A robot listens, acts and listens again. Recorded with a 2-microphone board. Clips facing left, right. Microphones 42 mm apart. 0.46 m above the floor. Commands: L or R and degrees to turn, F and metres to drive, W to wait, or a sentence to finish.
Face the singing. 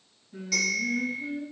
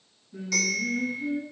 L70
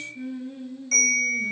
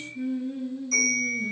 L10
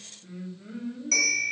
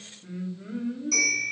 R20
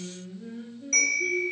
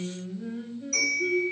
R30
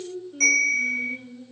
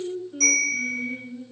R15
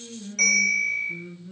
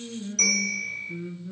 R10
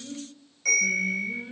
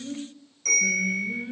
Facing the singing.